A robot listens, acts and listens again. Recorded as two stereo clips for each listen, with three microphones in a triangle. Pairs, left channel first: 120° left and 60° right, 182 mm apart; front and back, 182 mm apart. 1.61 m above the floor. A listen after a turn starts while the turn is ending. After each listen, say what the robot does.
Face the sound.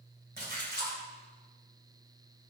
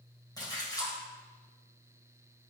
Turn 65° right.
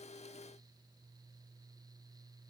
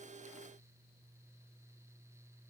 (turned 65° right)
Facing where the splash came from. I can't hear it now.